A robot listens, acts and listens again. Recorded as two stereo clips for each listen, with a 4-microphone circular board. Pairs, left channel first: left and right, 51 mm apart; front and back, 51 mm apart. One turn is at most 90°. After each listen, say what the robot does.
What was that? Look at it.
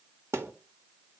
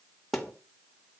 Turn 85° right.
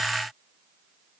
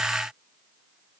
I heard a thud from this way, but can't make it out now.